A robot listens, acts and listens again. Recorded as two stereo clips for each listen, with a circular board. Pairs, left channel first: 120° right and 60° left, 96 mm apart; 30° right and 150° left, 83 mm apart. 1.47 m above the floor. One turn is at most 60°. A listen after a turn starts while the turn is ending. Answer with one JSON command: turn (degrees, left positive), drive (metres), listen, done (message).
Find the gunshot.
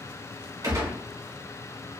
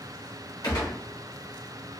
{"turn": 10}
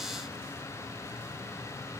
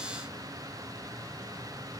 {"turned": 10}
{"done": "Facing where the gunshot came from. I can't hear it now."}